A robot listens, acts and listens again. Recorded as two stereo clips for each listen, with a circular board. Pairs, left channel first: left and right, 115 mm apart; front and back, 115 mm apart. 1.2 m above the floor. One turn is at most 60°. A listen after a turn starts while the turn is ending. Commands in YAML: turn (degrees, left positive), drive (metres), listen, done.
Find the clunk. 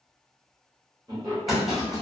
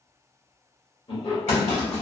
done: "Found it: a clunk, straight ahead, 1 to 2 m away."